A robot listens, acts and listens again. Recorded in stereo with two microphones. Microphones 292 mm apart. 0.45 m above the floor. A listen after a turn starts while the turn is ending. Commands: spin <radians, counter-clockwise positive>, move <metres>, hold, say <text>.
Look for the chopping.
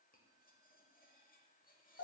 hold
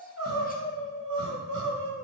hold
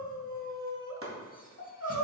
spin -0.79
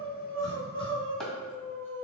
say Found it: chopping, straight ahead.